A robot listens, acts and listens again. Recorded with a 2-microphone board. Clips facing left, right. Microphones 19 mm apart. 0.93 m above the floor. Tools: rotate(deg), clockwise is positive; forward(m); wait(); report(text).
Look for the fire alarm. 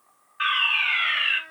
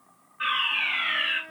rotate(-50)
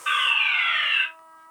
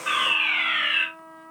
report("Found it: a fire alarm, straight ahead.")